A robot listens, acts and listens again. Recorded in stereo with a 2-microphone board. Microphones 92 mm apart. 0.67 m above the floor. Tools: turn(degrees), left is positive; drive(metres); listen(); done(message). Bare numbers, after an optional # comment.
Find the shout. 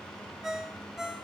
listen()
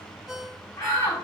# The shout: about 30° left or 150° left.
turn(30)
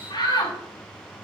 # So it is at 120° left.
turn(120)
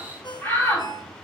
# The shout is now 20° left.
turn(20)
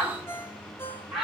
done("Facing the shout.")